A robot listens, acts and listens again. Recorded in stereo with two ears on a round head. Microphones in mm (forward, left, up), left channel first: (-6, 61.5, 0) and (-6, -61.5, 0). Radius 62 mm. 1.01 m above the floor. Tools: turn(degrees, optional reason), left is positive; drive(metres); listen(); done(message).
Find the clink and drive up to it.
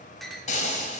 turn(degrees=30)
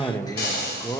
listen()
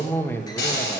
listen()
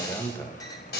done("I heard a clink, but can't make it out now. It was about 30° right or 150° left. I did not reach it.")